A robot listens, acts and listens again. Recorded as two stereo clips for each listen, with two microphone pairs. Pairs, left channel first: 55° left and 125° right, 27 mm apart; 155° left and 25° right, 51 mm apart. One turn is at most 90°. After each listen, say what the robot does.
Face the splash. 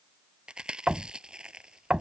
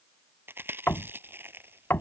Keep listening.
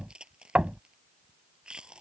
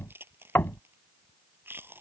Keep listening.
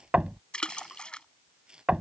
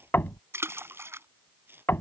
Facing the splash.